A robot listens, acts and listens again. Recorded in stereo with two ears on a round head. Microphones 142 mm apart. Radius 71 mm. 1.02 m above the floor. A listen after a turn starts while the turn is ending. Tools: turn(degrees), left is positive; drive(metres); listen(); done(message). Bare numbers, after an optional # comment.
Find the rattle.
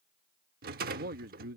# The rattle: about 65° right or 115° right.
turn(-65)
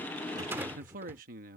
# So it is at 15° right.
turn(-15)
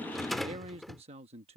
done("Facing the rattle.")